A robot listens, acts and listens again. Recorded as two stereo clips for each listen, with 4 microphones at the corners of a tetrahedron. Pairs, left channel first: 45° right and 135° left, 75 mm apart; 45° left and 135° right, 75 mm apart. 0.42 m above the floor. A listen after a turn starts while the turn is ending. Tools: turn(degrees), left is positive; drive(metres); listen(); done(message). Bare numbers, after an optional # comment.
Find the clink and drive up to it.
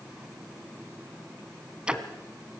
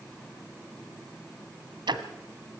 listen()
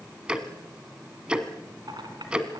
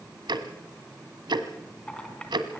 # The clink: 120° left.
turn(120)
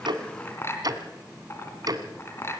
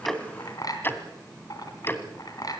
# The clink is now 15° left.
turn(15)
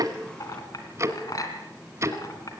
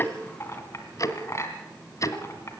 drive(1.0)
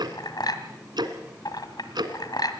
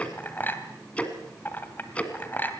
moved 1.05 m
# The clink is now 20° right.
turn(-20)
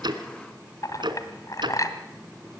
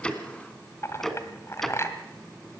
drive(1.0)
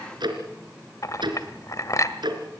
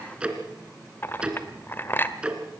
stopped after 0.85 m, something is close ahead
# The clink is now 10° right.
turn(-10)
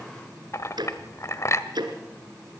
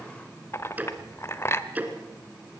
done("I am next to the clink.")